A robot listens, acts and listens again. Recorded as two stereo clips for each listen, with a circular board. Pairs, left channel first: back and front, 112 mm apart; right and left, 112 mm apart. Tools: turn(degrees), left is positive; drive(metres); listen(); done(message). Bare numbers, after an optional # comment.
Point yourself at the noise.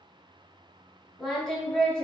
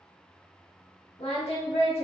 # The singing: 100° right.
turn(-100)
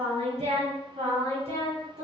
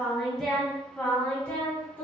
# The singing is now 15° right.
turn(-15)
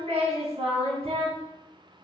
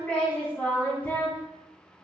# The singing is now 15° right.
turn(-15)
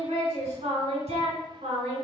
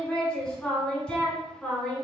done("Found it: singing, straight ahead.")